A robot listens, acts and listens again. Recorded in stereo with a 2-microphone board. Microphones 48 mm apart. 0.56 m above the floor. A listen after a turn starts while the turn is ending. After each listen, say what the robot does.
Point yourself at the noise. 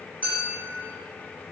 Turn 30° left.
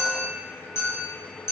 Turn 115° left.
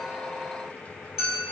Facing the clink.